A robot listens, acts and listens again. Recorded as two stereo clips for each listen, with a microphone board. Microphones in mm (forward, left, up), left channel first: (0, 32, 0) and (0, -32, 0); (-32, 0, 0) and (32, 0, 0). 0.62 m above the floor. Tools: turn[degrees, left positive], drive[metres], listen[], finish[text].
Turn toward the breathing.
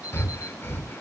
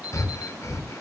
Thought: The breathing: 140° left.
Action: turn[140]
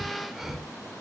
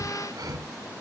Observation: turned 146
Action: finish[Found it: breathing, straight ahead, 1 to 2 m away.]